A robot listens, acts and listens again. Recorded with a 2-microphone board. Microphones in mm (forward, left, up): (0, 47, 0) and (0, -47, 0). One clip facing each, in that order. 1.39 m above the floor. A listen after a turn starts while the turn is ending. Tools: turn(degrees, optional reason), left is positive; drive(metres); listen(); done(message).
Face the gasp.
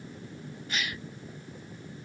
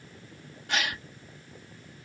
turn(degrees=-90)
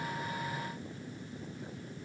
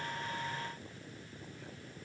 done("Facing where the gasp came from. I can't hear it now.")